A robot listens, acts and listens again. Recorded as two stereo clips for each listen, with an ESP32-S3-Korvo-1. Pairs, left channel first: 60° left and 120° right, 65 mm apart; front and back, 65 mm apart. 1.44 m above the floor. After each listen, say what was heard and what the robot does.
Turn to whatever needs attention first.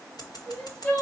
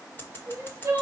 The crying: 125° left. Turn 125° left.
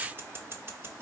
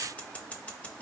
Keep listening.
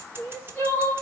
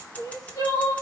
Found it: crying, straight ahead, 2 to 4 m away.